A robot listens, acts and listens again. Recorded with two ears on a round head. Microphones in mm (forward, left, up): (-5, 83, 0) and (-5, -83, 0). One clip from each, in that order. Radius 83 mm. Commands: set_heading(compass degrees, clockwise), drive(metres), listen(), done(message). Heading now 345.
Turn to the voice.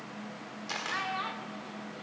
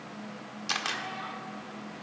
set_heading(290)
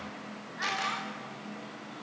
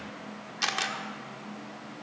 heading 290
listen()
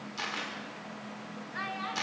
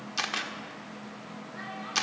set_heading(230)
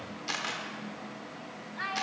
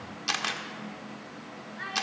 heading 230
set_heading(205)
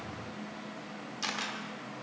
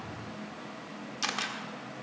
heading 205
listen()
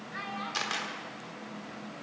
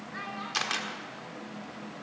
done("Found it: a child speaking, straight ahead.")